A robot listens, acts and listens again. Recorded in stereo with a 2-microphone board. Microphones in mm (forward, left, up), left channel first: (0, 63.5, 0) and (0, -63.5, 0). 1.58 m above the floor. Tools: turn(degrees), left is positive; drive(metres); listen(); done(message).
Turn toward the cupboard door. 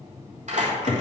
turn(degrees=90)
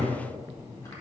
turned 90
done("Found it: a cupboard door, straight ahead, 2 to 4 m away.")